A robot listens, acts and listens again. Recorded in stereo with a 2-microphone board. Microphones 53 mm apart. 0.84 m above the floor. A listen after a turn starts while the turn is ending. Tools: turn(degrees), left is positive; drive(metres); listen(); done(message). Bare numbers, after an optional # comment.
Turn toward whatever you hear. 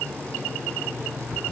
# The alarm clock: about 50° left or 130° left.
turn(50)
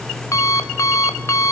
# So it is at 80° left.
turn(80)
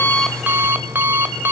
# The alarm clock is now 40° right.
turn(-40)
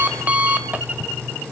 # The alarm clock is now 25° right.
turn(-25)
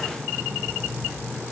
# The alarm clock is now 10° right.
turn(-10)
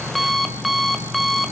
done("Facing the alarm clock, 1 to 2 m away.")